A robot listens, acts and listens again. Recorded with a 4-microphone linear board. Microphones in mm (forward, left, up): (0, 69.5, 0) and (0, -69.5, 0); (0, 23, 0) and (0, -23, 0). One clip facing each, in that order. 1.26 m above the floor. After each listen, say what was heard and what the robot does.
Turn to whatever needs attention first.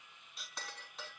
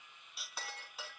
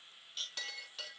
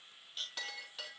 Keep listening.
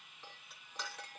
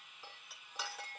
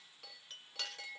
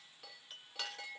Keep listening.
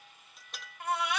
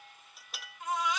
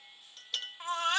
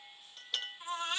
The baby crying: about 70° left or 110° left. Turn 70° left.
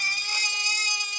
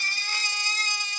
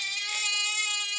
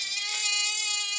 So it is at 15° left. Turn 15° left.
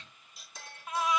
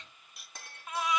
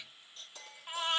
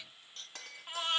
Facing the baby crying.